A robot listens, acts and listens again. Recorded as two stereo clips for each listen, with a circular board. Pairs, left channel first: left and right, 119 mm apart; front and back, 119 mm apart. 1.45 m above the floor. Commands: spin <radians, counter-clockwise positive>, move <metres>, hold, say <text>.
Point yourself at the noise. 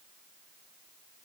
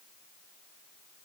hold
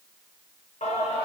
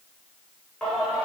spin 1.48
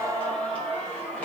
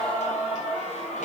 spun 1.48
spin 0.17
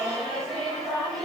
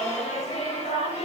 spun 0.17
say Found it: singing, straight ahead, over 4 m away.